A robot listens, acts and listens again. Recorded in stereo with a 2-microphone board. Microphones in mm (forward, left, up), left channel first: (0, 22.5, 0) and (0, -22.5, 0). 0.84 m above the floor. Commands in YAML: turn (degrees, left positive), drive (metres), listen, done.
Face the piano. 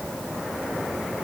listen: true
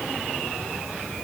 listen: true
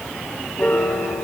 turn: 35
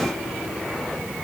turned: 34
listen: true
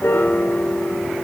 turn: 105
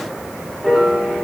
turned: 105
done: "Facing the piano, 2 to 4 m away."